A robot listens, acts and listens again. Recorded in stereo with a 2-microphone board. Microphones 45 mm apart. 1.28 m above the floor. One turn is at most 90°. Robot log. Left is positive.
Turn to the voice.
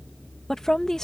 cmd yaw +30
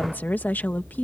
note: So it is at 135° left.
cmd yaw +90
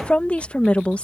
note: The woman speaking is now 30° left.
cmd yaw +30
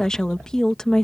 note: The woman speaking is now 15° left.
cmd yaw +15
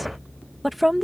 end: Facing the woman speaking.